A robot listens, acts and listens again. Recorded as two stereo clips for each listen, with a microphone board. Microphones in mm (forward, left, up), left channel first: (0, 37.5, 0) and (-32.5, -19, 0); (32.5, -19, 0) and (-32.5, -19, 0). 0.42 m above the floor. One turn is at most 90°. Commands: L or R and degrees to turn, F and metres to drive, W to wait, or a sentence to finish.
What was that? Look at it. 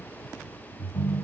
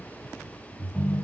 L90
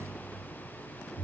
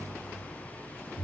L35
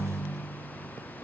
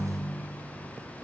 Found it: a ringtone, straight ahead, 1 to 2 m away.